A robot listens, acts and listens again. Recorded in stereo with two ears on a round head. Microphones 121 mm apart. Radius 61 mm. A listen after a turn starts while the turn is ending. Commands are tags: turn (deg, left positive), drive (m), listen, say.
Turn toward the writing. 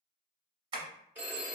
<listen/>
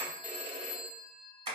<listen/>
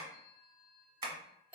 <say>I can't make out writing, only a phone ringing and tapping.</say>